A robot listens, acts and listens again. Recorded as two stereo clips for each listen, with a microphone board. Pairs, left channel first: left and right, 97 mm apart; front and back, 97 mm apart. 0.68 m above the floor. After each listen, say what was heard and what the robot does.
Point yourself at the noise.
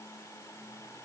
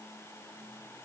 Keep listening.
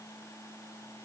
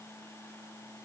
Keep listening.
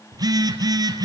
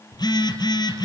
The phone buzzing: 45° right. Turn 45° right.
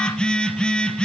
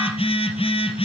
The phone buzzing is now 10° left. Turn 10° left.
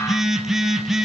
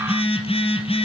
Found it: a phone buzzing, straight ahead.